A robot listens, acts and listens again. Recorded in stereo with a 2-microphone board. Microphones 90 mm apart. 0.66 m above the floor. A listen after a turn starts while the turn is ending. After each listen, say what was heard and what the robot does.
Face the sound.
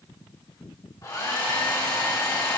The hair dryer: about 45° left or 135° left. Turn 45° left.
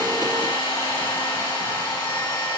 So it is at 85° left. Turn 85° left.
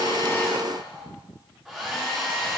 Facing the hair dryer, 2 to 4 m away.